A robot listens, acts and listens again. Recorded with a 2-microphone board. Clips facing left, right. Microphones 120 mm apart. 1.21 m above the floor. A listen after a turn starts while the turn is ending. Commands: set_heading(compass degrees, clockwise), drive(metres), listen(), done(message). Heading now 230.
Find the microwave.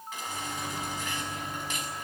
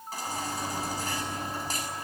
set_heading(260)
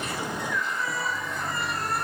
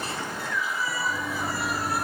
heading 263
set_heading(23)
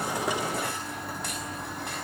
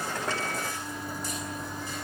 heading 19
done("Facing the microwave, 2 to 4 m away.")